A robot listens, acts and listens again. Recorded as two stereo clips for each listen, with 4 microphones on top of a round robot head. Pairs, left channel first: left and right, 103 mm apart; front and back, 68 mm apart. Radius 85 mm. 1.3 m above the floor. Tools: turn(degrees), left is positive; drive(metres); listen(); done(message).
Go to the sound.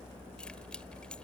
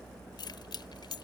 drive(metres=1.0)
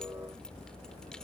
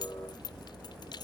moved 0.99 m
drive(metres=1.0)
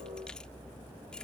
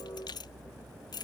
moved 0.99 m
drive(metres=1.0)
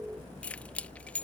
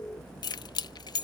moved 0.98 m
turn(degrees=10)
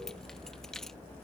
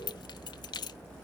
drive(metres=1.0)
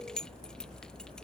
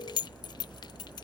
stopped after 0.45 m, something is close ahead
done("Arrived at the keys jangling, straight ahead.")